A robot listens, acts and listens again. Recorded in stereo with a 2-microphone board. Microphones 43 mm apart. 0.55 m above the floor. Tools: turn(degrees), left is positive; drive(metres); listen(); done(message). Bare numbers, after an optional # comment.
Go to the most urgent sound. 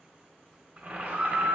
# The scream: about 50° right or 130° right.
turn(-50)
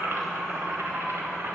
listen()
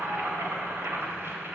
listen()
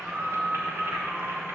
drive(1.0)
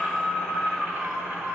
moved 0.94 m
drive(1.0)
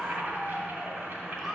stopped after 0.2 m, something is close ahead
done("I am next to the scream.")